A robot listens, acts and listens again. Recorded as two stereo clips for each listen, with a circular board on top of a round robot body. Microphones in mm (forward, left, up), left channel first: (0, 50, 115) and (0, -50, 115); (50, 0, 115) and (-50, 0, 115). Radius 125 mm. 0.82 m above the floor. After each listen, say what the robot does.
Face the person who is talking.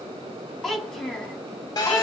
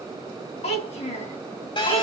Facing the child speaking.